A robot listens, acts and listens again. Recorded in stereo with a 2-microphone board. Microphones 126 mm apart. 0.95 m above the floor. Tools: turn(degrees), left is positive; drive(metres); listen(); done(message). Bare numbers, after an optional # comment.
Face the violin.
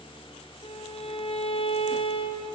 # The violin: about 50° left or 130° left.
turn(50)
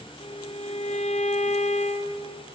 # So it is at 85° left.
turn(85)
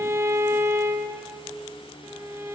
# The violin is now 25° right.
turn(-25)
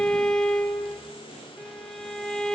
done("Found it: a violin, straight ahead.")